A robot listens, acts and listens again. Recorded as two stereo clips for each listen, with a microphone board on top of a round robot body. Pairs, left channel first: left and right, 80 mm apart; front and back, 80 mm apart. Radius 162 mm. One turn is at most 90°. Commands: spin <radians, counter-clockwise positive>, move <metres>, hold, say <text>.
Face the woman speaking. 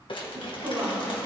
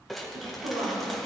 spin -1.57
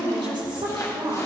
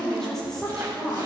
spin -1.40
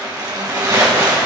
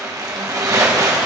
hold
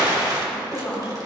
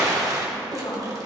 spin 0.17
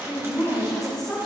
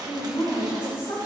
say Facing the woman speaking.